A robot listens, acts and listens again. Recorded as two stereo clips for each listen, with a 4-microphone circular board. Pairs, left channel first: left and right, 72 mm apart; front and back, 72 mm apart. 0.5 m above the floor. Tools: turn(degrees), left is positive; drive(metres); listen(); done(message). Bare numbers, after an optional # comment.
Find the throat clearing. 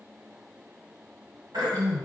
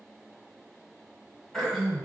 # The throat clearing: 85° right.
turn(-85)
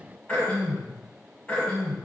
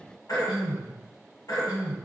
# The throat clearing is now 20° left.
turn(20)
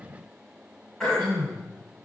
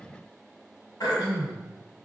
# The throat clearing is now 10° left.
turn(10)
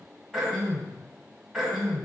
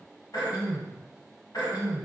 done("Found it: throat clearing, straight ahead, 1 to 2 m away.")